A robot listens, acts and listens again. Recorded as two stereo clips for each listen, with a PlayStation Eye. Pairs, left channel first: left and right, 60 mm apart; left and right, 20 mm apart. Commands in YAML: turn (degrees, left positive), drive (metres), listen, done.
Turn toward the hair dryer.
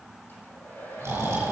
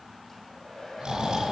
turn: 30
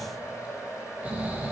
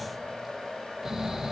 turn: 120
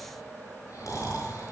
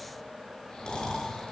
listen: true
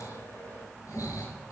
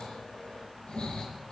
listen: true
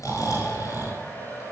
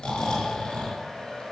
turn: 30
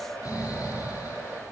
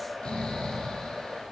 turn: 20
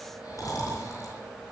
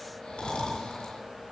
listen: true
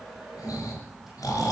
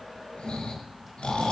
listen: true
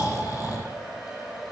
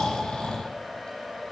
done: "Found it: a hair dryer, straight ahead."